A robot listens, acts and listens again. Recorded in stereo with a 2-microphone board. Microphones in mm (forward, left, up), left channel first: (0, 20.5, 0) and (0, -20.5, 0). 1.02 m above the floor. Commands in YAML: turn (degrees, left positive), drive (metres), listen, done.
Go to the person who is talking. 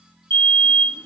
listen: true
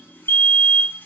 listen: true
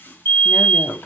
turn: 55
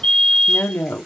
turn: 70
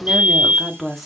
drive: 1.0
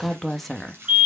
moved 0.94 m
drive: 1.0
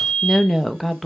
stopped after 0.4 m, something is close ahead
done: "Arrived at the woman speaking, straight ahead."